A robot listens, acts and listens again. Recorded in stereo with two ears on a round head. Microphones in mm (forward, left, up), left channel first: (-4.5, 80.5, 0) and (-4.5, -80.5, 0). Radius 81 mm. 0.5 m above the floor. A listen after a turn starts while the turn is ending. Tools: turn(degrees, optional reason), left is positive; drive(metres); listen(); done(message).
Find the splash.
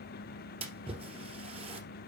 turn(degrees=-35, reason="The splash: about 35° right or 145° right.")
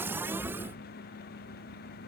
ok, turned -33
listen()
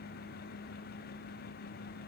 done("I heard a splash, but can't make it out now. It was about straight ahead or 115° right.")